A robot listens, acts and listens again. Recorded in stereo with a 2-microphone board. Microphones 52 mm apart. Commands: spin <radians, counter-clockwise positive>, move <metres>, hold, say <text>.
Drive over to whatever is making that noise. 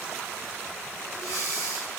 spin 1.57
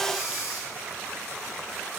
move 1.0
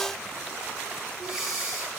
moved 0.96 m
spin -0.17
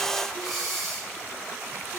move 1.0
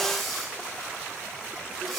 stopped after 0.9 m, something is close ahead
say I am next to the breathing.